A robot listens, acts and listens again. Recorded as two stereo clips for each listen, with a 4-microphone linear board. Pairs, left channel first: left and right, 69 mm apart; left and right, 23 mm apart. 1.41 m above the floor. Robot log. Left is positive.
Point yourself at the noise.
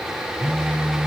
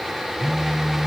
note: The phone buzzing: about 25° right or 155° right.
cmd yaw -25
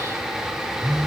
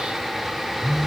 end: Facing the phone buzzing.